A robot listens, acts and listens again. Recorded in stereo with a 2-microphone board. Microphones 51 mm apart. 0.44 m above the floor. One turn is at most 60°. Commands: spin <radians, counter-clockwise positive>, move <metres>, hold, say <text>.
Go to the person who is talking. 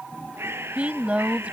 spin -0.44
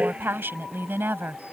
spin -1.05
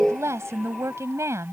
spin -1.05
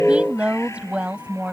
spin -0.44
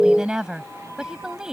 spin -0.26
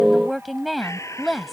move 1.0
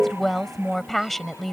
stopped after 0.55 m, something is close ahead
say Blocked. The woman speaking is further on, straight ahead.